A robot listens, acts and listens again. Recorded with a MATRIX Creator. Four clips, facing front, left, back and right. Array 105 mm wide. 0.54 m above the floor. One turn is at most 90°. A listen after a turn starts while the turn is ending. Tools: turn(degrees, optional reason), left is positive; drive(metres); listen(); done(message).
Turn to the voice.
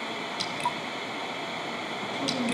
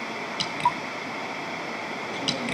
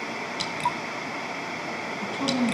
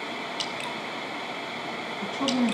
turn(degrees=-90, reason="The woman speaking: 115° right.")
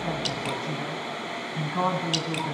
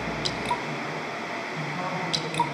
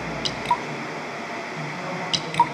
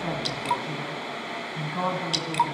turn(degrees=-25, reason="The woman speaking is now 25° right.")
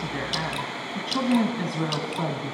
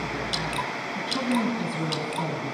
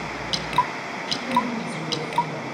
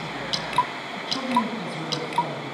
done("Facing the woman speaking, 2 to 4 m away.")